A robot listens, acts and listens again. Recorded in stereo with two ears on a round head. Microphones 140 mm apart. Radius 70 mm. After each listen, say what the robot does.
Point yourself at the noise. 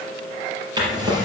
Turn 25° right.
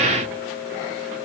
Keep listening.
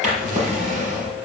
Turn 130° right.
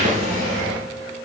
Turn 45° right.
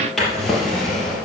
Facing the drawer, 2 to 4 m away.